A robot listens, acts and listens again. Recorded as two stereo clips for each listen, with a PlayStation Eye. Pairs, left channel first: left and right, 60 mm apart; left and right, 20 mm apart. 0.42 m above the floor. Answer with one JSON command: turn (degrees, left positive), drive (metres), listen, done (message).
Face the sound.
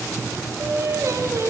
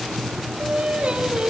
{"turn": -55}
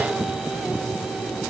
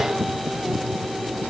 {"listen": true}
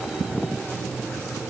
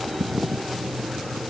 {"listen": true}
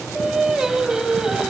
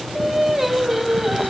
{"turn": -10}
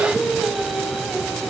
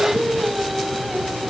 {"done": "Found it: singing, straight ahead, 2 to 4 m away."}